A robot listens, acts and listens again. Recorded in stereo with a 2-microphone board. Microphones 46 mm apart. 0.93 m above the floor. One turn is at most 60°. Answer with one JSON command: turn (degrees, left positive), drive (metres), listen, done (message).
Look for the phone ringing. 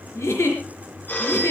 {"turn": 40}
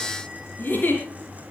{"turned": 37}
{"listen": true}
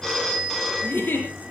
{"done": "Found it: a phone ringing, straight ahead."}